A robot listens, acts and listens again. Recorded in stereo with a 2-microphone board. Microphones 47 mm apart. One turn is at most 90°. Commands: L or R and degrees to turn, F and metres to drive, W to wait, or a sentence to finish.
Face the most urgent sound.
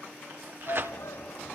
L90
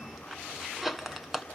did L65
L25
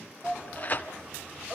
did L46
R20
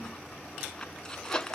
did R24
W
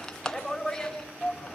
Facing the shout, over 4 m away.